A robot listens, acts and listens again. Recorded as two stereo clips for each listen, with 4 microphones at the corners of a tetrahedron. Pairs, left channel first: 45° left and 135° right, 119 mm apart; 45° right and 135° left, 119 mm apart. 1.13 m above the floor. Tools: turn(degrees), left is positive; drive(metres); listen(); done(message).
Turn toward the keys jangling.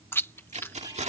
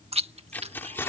turn(degrees=-115)
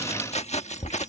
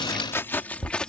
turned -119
turn(degrees=40)
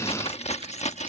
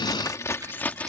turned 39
turn(degrees=35)
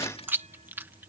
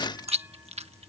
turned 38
listen()
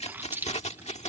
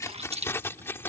turn(degrees=25)
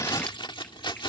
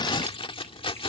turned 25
done("Found it: keys jangling, straight ahead.")